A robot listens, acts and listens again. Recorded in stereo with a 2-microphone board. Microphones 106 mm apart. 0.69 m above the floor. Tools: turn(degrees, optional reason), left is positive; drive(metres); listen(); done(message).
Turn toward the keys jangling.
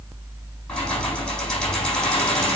turn(degrees=30)
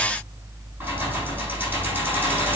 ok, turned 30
turn(degrees=-20, reason="So it is at 20° right.")
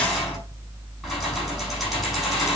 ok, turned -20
done("Found it: keys jangling, straight ahead, over 4 m away.")